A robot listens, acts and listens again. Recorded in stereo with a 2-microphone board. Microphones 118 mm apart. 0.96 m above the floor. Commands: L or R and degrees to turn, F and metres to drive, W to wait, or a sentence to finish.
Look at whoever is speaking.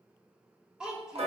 R30
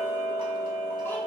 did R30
W
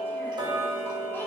W
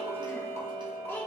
L20
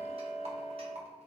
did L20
W
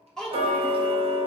Facing the child speaking, 1 to 2 m away.